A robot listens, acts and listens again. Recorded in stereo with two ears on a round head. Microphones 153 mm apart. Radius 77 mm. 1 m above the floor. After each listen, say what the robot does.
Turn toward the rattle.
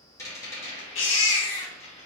Turn 20° left.
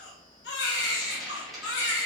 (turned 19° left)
Found it: a rattle, straight ahead, 2 to 4 m away.